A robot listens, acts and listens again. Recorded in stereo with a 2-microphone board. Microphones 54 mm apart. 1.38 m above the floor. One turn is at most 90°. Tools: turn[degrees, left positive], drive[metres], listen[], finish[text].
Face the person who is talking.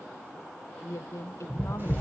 Thought: The woman speaking: about 65° left or 115° left.
Action: turn[65]
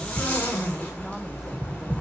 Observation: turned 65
Action: listen[]
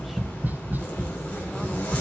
Action: listen[]
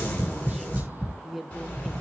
Action: finish[Facing the woman speaking, 1 to 2 m away.]